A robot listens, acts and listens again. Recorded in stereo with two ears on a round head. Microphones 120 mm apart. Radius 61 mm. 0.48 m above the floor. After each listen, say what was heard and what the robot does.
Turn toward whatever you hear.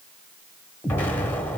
The explosion: about 15° left or 165° left. Turn 15° left.
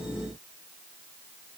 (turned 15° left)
Keep listening.
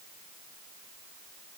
I heard an explosion, but can't make it out now. It was about straight ahead or 150° left.